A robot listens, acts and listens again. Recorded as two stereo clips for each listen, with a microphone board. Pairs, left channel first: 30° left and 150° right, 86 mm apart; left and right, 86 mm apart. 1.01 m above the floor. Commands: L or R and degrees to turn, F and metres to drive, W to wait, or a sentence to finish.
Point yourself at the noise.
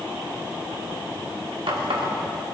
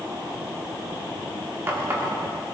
R150
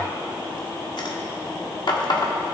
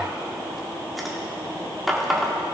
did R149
Found it: a running tap, straight ahead, 1 to 2 m away.